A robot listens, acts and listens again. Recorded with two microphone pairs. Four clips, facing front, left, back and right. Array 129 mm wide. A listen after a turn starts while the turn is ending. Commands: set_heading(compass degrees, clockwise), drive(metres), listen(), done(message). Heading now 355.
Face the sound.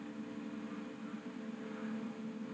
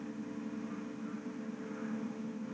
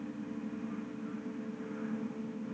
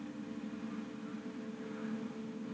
listen()
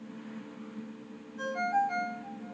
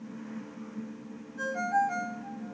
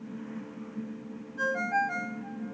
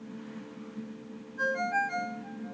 set_heading(190)
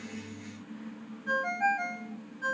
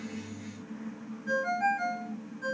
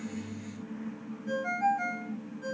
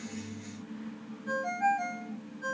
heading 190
done("Facing the ringtone.")